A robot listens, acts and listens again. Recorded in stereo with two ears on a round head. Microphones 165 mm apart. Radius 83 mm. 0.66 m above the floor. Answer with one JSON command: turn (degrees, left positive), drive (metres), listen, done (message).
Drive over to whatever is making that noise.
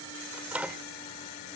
{"turn": -30}
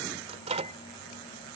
{"turn": -145}
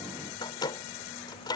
{"turn": 25}
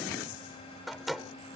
{"drive": 1.0}
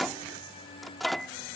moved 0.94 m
{"drive": 1.0}
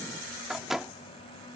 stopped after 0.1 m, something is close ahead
{"done": "Arrived at the microwave, straight ahead."}